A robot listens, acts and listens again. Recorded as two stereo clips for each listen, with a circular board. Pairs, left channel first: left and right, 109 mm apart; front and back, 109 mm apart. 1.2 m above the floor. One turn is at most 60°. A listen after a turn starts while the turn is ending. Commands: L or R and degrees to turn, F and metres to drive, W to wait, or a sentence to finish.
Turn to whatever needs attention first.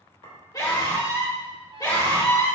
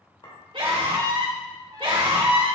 L60
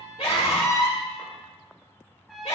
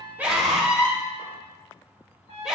L60
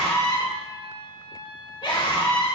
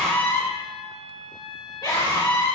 L50
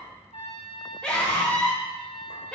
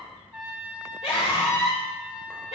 L10
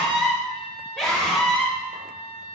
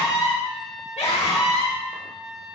Found it: a scream, straight ahead.